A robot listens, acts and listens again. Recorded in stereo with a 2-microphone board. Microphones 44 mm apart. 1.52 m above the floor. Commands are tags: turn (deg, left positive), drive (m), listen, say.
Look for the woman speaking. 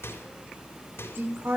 <turn deg="-60"/>
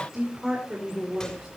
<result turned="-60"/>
<turn deg="-10"/>
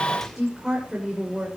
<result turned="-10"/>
<turn deg="-10"/>
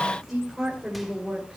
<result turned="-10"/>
<say>Found it: a woman speaking, straight ahead.</say>